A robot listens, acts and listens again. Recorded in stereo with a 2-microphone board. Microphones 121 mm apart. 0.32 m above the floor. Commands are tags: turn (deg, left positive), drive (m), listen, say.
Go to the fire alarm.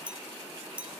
<listen/>
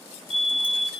<turn deg="55"/>
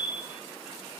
<turn deg="55"/>
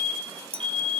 <drive m="1.0"/>
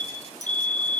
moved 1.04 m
<turn deg="15"/>
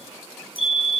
<drive m="1.0"/>
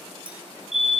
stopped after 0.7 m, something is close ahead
<say>Arrived at the fire alarm, straight ahead.</say>